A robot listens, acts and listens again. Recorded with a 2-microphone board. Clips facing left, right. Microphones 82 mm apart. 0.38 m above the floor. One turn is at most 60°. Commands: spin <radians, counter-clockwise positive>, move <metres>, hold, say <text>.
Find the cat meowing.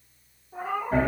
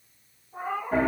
spin 1.05
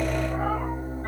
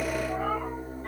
spin 0.52
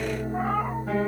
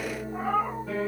spin 0.87
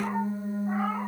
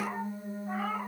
hold
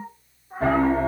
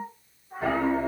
spin 0.70
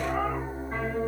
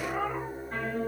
hold
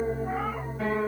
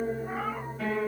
hold
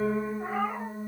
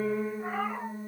say Facing the cat meowing.